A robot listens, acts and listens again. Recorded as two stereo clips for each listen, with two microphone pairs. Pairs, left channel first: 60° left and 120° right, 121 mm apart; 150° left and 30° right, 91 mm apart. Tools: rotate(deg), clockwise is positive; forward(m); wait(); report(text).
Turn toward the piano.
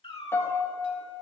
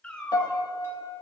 rotate(-125)
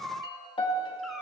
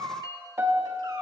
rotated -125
rotate(-25)
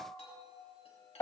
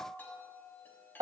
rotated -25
report("Facing the piano, 1 to 2 m away.")